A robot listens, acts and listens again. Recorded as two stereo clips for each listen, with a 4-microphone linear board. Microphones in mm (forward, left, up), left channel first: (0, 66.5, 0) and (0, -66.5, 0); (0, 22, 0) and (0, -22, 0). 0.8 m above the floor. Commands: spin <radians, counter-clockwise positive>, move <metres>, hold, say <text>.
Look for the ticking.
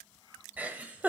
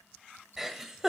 hold
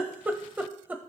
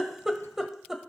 hold
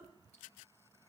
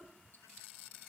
say I can't make out ticking, only a giggle.